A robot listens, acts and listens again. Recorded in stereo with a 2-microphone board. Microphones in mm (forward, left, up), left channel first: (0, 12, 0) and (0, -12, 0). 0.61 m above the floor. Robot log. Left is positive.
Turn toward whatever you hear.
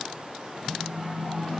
note: The phone buzzing: about 60° right or 120° right.
cmd yaw -60
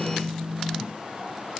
note: So it is at 65° right.
cmd yaw -65
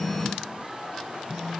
note: The phone buzzing is now 10° right.
cmd yaw -10
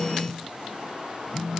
end: Facing the phone buzzing.